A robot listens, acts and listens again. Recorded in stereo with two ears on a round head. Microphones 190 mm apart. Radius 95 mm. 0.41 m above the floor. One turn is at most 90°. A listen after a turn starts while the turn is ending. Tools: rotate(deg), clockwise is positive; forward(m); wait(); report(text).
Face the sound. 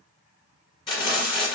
rotate(-20)
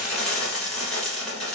report("Found it: frying, straight ahead.")